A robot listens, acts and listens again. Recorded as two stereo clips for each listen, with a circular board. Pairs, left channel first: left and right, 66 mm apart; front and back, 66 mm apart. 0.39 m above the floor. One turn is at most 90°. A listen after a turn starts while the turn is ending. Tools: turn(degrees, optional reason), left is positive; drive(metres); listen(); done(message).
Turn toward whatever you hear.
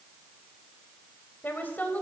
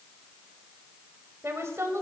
turn(degrees=90, reason="The woman speaking: 150° left.")
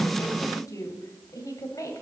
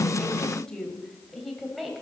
turn(degrees=90, reason="The woman speaking is now 95° left.")
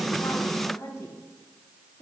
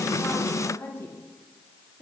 turn(degrees=55, reason="The woman speaking is now 55° left.")
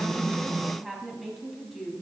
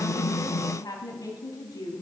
done("Found it: a woman speaking, straight ahead.")